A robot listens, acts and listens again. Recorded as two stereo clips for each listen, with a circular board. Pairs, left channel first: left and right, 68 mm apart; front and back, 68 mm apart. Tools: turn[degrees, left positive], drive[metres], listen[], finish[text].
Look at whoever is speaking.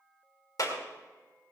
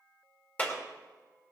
Action: listen[]
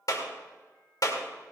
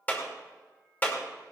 Action: listen[]
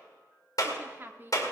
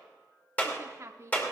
Thought: The woman speaking: 140° right.
Action: turn[-140]
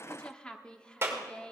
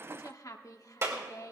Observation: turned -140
Thought: The woman speaking is now 15° left.
Action: turn[15]
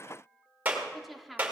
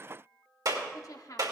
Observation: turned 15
Action: finish[Found it: a woman speaking, straight ahead, 1 to 2 m away.]